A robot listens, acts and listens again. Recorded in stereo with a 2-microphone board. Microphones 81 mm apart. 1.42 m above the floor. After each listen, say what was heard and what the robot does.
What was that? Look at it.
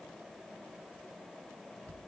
Keep listening.
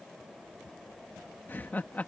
The laughter: about 20° left or 160° left. Turn 20° left.
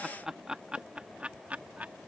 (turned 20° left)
So it is at 15° right. Turn 15° right.
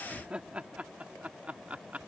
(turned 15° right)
The laughter is now 15° right. Turn 15° right.
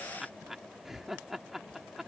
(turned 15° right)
Found it: laughter, straight ahead.